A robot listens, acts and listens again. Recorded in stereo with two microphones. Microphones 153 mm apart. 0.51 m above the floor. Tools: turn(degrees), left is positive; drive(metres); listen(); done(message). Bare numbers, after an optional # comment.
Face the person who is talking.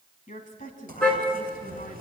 # The woman speaking: about 50° left or 130° left.
turn(50)
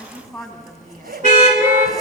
done("Facing the woman speaking.")